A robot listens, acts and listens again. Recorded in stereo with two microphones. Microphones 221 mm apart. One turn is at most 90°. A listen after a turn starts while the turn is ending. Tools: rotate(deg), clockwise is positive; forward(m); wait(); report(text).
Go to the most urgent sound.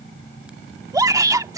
rotate(15)
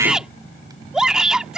forward(1.0)
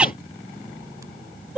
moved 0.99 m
forward(1.0)
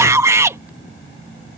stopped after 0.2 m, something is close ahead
rotate(15)
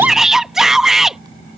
report("I am next to the shout.")